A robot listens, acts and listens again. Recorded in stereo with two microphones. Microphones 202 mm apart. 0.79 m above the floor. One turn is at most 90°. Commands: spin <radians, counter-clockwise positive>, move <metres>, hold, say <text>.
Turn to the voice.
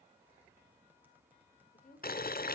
spin 0.70
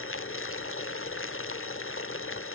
hold
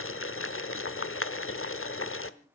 hold
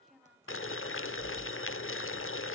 say Facing the woman speaking.